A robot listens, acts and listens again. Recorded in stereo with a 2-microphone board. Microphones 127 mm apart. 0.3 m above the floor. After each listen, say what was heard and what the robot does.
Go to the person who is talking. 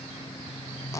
Keep listening.
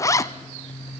Keep listening.
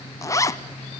I can't make out anyone speaking, only a zipper.